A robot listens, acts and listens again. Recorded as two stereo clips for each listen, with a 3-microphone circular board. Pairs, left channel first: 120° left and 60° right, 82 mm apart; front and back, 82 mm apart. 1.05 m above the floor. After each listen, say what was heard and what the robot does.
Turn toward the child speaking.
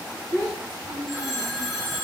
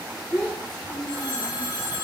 The child speaking: 65° left. Turn 65° left.
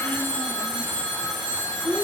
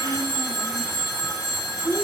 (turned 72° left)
Facing the child speaking, 2 to 4 m away.